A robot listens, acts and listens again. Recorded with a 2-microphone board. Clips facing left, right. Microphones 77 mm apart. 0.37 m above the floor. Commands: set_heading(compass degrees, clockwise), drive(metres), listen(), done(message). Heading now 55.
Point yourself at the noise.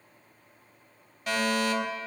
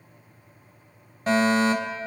set_heading(90)
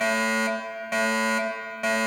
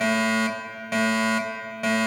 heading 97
done("Found it: a fire alarm, straight ahead, 2 to 4 m away.")